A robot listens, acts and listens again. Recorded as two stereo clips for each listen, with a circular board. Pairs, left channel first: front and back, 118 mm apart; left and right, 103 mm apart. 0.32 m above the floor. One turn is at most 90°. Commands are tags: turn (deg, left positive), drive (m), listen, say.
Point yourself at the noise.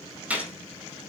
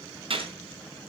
<turn deg="-90"/>
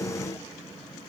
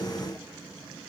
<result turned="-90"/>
<turn deg="-15"/>
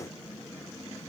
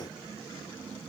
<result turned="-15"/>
<say>Facing where the gunshot came from. I can't hear it now.</say>